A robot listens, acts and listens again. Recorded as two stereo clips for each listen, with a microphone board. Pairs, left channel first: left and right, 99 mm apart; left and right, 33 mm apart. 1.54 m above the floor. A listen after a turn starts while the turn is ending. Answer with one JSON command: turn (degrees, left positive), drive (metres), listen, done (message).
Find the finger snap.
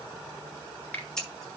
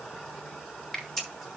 {"turn": 15}
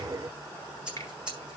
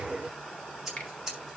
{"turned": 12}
{"listen": true}
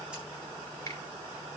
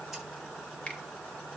{"listen": true}
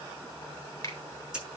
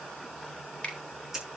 {"turn": 150}
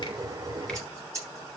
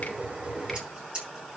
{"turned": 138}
{"turn": 10}
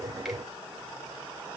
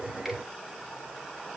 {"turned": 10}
{"listen": true}
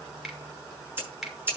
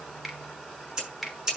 {"done": "Facing the finger snap, 2 to 4 m away."}